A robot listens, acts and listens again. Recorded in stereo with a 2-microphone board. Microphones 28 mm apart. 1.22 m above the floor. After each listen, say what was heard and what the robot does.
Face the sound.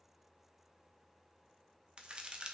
The crack: about 35° right or 145° right. Turn 35° right.
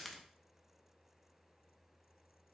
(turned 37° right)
Facing the crack, 1 to 2 m away.